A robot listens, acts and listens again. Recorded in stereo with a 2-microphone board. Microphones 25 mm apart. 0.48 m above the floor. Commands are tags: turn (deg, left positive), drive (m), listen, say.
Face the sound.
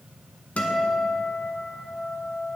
<turn deg="70"/>
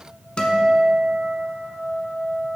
<turn deg="40"/>
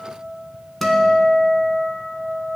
<say>Facing the guitar.</say>